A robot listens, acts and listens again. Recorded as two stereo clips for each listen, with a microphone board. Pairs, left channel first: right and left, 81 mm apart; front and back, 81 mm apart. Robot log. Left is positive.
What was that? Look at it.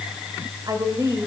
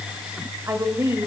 note: The woman speaking: 125° left.
cmd yaw +125
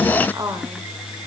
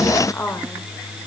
note: The woman speaking is now 55° left.
cmd yaw +55
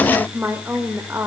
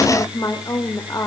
note: The woman speaking is now 35° left.
cmd yaw +35
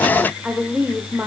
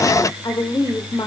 note: The woman speaking is now 25° left.
cmd yaw +25
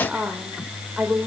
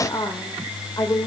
note: The woman speaking is now 20° left.
cmd yaw +20
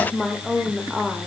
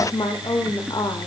end: Facing the woman speaking, 1 to 2 m away.